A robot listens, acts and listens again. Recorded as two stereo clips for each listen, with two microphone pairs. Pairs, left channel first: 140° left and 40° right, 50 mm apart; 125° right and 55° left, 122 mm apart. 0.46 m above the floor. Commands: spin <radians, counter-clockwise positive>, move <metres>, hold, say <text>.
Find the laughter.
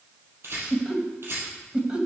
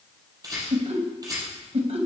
spin 0.52
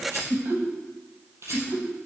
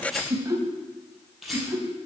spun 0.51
spin -0.35
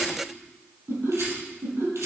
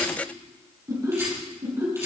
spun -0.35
spin -0.17
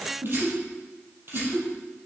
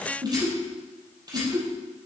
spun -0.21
say Found it: laughter, straight ahead.